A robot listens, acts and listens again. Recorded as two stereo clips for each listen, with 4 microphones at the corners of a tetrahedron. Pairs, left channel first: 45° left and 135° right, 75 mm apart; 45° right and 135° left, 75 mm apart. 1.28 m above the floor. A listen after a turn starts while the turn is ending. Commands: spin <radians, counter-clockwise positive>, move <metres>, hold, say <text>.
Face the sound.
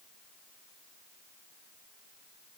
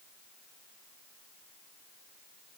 hold
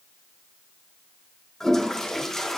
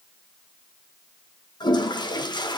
spin -0.70
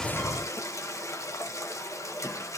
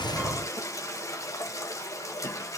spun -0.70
say Found it: a toilet flushing, straight ahead, 1 to 2 m away.